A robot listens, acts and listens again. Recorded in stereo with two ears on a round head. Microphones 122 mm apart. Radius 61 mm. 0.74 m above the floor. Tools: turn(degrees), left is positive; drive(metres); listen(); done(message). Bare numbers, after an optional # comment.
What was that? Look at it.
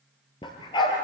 # The dog barking: about 35° left or 145° left.
turn(35)
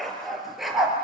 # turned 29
done("Facing the dog barking.")